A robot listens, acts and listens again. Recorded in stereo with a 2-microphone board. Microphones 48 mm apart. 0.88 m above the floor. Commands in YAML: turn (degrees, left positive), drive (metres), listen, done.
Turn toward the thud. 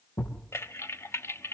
turn: 75
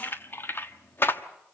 listen: true
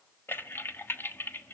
done: "I heard a thud, but can't make it out now. It was about straight ahead or 30° left."